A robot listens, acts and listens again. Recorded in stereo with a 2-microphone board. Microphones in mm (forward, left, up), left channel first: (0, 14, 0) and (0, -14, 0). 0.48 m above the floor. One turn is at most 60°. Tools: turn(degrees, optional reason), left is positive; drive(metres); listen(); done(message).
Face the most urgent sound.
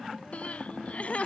turn(degrees=50, reason="The crying: about 50° left or 130° left.")
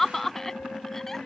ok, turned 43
turn(degrees=10, reason="So it is at 10° left.")
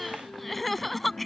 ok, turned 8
done("Found it: crying, straight ahead.")